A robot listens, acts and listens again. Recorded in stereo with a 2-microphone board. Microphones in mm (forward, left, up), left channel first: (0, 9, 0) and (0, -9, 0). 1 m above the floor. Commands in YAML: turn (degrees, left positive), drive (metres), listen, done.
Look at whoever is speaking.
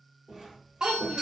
turn: -65
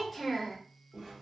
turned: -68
done: "Found it: a child speaking, straight ahead."